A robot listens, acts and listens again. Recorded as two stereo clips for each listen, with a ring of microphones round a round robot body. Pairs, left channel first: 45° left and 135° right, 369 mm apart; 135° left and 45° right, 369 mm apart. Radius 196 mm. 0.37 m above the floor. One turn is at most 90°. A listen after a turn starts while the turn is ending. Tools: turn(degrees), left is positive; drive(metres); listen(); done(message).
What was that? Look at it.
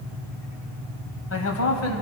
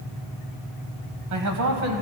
done("Facing the man speaking.")